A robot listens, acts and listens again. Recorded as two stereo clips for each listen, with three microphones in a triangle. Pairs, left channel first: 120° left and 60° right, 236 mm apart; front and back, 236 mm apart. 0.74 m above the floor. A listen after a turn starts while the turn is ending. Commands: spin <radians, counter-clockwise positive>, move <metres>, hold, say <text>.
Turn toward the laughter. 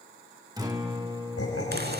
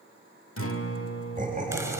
spin 2.18
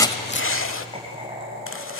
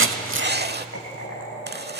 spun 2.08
say Facing the laughter, over 4 m away.